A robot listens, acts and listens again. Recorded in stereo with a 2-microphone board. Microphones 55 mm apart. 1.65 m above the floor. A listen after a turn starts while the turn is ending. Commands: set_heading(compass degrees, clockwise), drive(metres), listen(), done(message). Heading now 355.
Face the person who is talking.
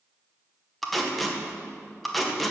listen()
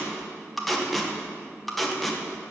listen()
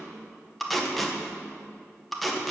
done("I can't make out anyone speaking, only tape being pulled.")